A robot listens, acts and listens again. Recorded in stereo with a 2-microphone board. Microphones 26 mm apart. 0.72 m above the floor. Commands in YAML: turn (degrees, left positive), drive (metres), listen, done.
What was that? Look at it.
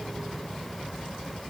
listen: true
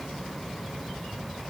listen: true
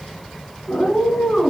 turn: 90
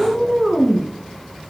turn: -15
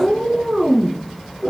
turn: -10
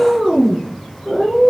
done: "Found it: a cat meowing, straight ahead, 2 to 4 m away."